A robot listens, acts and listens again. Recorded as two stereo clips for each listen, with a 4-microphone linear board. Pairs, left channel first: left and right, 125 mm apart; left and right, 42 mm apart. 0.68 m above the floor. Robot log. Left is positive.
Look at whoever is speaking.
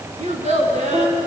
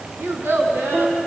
note: The child speaking: about 65° right or 115° right.
cmd yaw -65
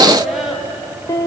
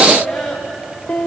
end: Found it: a child speaking, straight ahead.